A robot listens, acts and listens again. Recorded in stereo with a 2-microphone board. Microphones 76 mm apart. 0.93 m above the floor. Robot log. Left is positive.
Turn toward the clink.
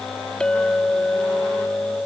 cmd yaw +30
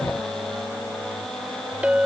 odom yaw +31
note: So it is at 20° right.
cmd yaw -20
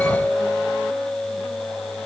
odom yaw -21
end: Facing the clink.